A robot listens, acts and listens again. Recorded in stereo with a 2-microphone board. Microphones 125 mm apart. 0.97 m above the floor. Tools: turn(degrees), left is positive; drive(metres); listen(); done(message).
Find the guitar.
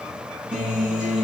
turn(degrees=-30)
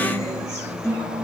turn(degrees=20)
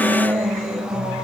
done("Found it: a guitar, straight ahead, over 4 m away.")